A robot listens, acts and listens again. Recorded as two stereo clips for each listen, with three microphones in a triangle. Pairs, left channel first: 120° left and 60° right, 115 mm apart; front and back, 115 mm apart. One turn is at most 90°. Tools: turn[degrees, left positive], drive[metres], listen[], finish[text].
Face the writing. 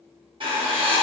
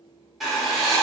Thought: The writing: 90° right.
Action: turn[-90]
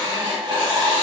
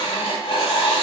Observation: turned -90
Thought: The writing is now 25° right.
Action: turn[-25]
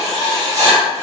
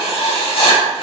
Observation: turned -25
Thought: The writing is now 10° right.
Action: turn[-10]
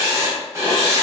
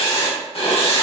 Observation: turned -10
Action: finish[Facing the writing.]